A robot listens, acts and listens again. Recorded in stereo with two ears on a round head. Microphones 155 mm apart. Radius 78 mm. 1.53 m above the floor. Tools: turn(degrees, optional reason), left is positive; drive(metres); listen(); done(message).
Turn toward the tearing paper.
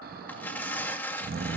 turn(degrees=30)
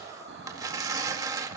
turn(degrees=-20, reason="So it is at 20° right.")
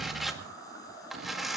done("Found it: tearing paper, straight ahead.")